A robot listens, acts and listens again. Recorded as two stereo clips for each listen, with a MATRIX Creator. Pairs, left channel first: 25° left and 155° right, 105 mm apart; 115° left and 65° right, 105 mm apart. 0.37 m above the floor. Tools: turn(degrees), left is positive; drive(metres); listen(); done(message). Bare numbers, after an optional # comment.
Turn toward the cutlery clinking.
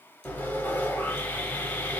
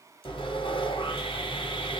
listen()
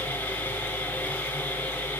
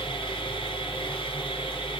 listen()
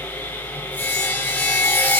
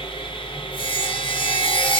done("I can't make out cutlery clinking to turn to.")